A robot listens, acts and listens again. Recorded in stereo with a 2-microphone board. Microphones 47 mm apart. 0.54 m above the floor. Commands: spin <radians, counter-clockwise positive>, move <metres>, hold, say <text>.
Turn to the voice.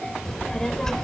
spin 0.52
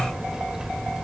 spin -0.26
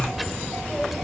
say Found it: a child speaking, straight ahead.